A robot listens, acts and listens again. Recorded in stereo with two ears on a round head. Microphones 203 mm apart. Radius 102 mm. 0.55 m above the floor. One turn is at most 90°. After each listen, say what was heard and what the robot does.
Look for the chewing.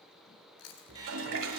The chewing: about 70° left or 110° left. Turn 70° left.
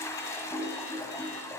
Keep listening.
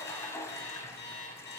Keep listening.
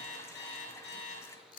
So it is at 40° left. Turn 40° left.
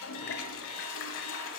Keep listening.
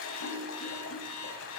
Keep listening.
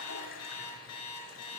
Facing where the chewing came from. I can't hear it now.